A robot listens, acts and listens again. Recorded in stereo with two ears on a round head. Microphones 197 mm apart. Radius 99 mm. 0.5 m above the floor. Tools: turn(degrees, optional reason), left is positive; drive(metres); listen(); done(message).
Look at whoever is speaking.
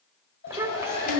turn(degrees=-30)
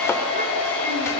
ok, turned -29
listen()
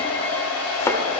listen()
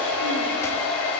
done("I heard a child speaking, but can't make it out now. It was about 15° left or 140° right.")